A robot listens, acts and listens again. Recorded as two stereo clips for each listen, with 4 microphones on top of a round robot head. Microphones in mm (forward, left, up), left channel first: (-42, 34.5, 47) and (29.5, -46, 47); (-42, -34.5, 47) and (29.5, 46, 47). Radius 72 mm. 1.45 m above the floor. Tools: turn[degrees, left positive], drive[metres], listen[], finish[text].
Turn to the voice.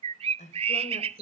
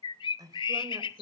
Thought: The woman speaking: 105° left.
Action: turn[105]
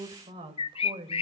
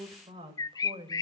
Action: finish[Facing the woman speaking.]